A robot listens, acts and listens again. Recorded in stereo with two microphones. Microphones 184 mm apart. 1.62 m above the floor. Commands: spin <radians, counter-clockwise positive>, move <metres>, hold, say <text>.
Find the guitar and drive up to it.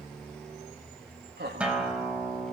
spin -0.52
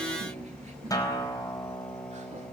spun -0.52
spin 0.35
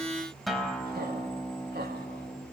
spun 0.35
move 1.0
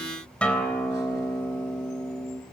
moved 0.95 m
move 1.0
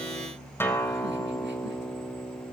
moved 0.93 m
spin 0.26
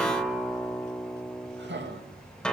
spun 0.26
move 1.0
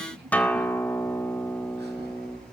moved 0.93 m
spin 0.17
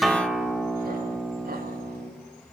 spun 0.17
move 1.0
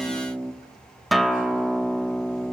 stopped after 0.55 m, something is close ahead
say I am next to the guitar.